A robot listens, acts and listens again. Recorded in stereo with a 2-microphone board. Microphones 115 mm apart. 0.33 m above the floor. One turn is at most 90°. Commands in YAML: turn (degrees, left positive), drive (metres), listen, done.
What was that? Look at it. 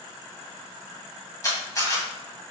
turn: 30
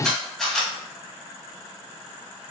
done: "Facing the camera shutter, 1 to 2 m away."